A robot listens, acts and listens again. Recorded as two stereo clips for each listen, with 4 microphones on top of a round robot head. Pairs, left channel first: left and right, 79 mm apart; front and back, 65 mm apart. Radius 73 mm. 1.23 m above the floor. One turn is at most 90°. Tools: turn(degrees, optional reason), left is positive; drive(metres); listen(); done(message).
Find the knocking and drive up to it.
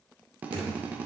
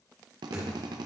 turn(degrees=-90, reason="The knocking: 120° right.")
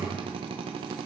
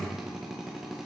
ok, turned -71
turn(degrees=-50, reason="The knocking is now 50° right.")
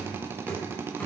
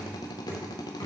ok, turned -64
turn(degrees=15, reason="The knocking is now 15° left.")
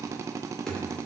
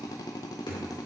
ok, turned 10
turn(degrees=10, reason="The knocking is now 10° left.")
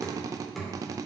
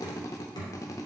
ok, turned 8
drive(metres=1.0)
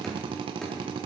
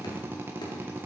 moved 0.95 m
drive(metres=1.0)
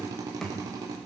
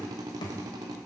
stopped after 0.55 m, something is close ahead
done("Arrived at the knocking, straight ahead.")